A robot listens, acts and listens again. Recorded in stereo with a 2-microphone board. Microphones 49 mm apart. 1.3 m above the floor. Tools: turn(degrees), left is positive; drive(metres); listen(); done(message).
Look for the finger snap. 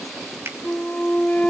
turn(degrees=-60)
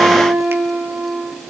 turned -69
listen()
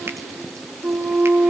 listen()
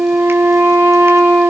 done("I heard a finger snap, but can't make it out now. It was about 10° left or 50° right.")